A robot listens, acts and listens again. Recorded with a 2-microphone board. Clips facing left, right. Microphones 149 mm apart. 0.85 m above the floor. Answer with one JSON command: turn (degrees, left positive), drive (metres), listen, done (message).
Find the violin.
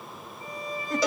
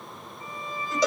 {"turn": 35}
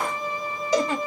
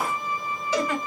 {"turn": 105}
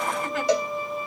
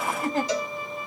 {"turn": 30}
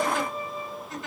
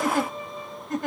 {"turn": 10}
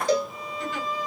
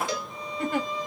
{"done": "Facing the violin, 1 to 2 m away."}